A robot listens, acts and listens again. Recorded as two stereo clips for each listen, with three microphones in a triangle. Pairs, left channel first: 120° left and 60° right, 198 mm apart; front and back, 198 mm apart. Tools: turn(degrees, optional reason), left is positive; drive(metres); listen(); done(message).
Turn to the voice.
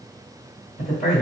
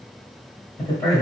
turn(degrees=75, reason="The man speaking: 75° left.")
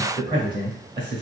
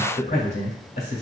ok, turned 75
done("Facing the man speaking.")